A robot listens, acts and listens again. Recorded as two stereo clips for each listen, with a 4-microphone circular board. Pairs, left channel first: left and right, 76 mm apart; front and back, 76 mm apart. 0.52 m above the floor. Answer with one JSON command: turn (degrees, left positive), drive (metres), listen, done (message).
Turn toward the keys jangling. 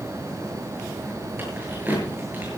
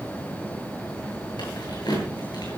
{"turn": -25}
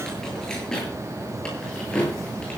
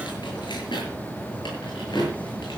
{"turn": 15}
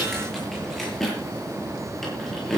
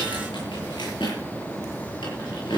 {"done": "Found it: keys jangling, straight ahead."}